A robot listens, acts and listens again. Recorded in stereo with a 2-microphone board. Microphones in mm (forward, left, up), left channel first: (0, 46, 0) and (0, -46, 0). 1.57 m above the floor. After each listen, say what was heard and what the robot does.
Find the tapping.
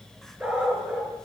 Keep listening.
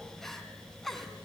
Keep listening.
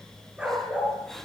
I can't make out tapping, only crying and a dog barking.